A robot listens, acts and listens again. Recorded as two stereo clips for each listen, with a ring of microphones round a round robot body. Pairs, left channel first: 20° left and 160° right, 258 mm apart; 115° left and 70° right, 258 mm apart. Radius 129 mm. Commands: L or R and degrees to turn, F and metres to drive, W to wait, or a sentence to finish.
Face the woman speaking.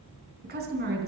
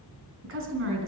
R105
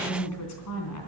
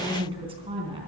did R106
Found it: a woman speaking, straight ahead.